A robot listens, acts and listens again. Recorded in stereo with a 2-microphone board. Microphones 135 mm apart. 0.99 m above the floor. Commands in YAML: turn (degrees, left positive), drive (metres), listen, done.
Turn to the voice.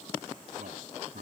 turn: -75
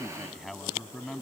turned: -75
done: "Facing the man speaking."